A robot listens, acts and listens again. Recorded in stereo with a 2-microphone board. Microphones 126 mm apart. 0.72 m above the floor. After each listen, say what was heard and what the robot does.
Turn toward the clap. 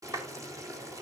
The clap: about 30° right or 150° right. Turn 30° right.
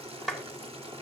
Facing the clap, 2 to 4 m away.